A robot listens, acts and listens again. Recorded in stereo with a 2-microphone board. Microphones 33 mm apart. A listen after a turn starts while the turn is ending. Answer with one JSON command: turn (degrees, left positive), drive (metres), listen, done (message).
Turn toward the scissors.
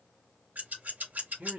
{"turn": -60}
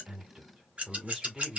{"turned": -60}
{"turn": -45}
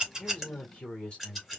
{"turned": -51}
{"done": "Found it: scissors, straight ahead, 2 to 4 m away."}